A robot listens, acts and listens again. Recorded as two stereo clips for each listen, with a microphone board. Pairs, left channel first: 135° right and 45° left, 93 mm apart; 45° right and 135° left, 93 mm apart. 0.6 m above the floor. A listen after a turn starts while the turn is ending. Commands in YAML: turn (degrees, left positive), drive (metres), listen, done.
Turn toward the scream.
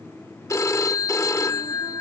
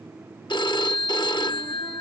listen: true
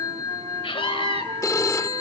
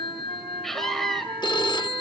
turn: -135
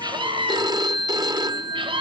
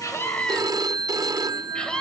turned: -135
turn: 35
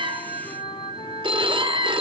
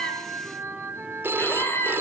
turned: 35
turn: 15
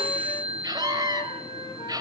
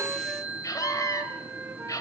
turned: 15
done: "Found it: a scream, straight ahead."